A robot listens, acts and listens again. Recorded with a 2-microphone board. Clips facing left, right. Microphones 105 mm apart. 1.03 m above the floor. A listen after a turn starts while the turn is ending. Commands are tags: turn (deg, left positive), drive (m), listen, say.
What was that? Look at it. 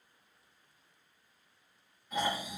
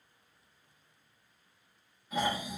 <turn deg="-30"/>
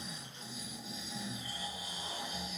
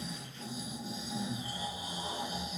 <turn deg="-145"/>
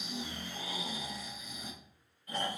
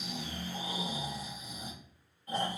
<turn deg="-30"/>
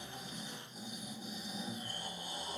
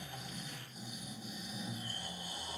<turn deg="20"/>
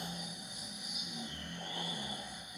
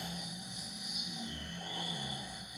<turn deg="10"/>
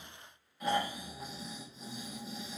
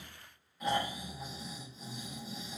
<say>Found it: snoring, straight ahead.</say>